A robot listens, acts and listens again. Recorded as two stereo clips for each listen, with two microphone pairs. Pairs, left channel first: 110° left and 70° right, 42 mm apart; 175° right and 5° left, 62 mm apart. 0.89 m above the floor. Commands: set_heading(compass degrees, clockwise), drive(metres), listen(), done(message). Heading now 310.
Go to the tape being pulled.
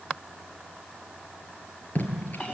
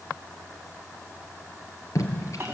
set_heading(155)
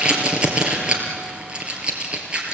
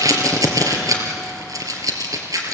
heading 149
drive(1.0)
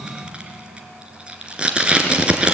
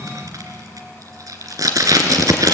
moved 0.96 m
drive(1.0)
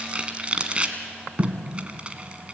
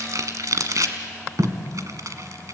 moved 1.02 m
set_heading(159)
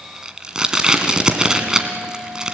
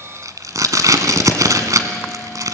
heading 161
drive(1.0)
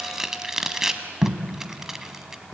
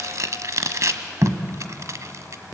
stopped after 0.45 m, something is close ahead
set_heading(151)
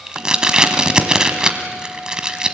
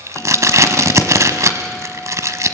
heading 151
done("I am next to the tape being pulled.")